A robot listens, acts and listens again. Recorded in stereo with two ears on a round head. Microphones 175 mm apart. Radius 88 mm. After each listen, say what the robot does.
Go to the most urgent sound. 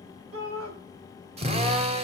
Turn 90° right.
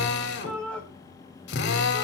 Drive 1.0 m forward.
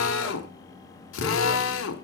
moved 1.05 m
Keep listening.
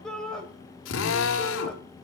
Drive 1.0 m forward.
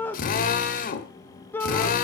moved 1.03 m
Turn 10° left.
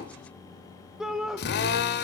Drive 1.0 m forward.
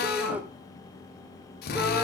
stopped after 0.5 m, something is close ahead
Turn 10° right.
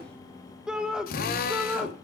Arrived at the shout, straight ahead.